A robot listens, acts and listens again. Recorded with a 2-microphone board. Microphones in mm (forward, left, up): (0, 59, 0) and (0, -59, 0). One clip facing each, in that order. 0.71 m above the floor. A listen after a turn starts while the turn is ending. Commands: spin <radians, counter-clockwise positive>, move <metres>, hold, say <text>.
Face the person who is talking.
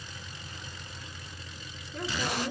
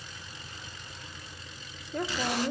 spin -0.79
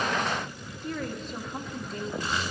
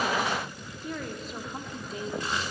say Facing the woman speaking, 1 to 2 m away.